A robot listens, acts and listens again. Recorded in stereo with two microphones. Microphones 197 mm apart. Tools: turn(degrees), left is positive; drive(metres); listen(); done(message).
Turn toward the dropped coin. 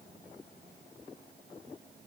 listen()
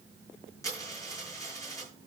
turn(degrees=15)
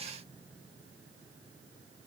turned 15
listen()
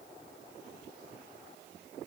done("I heard a dropped coin, but can't make it out now. It was about straight ahead or 150° left.")